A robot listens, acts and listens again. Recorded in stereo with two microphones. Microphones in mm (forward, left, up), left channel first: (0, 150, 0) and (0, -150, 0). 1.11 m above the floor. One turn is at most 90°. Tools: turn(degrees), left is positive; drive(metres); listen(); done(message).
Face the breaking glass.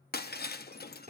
turn(degrees=30)
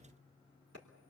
listen()
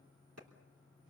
done("I heard breaking glass, but can't make it out now. It was about straight ahead or 120° left.")